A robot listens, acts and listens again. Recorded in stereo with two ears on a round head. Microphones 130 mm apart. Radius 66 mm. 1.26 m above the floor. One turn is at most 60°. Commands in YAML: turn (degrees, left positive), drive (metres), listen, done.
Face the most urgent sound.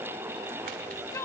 turn: 20
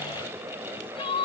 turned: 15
turn: 60
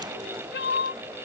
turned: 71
turn: 60
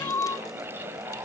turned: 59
turn: 15
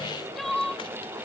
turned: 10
done: "Facing the crying."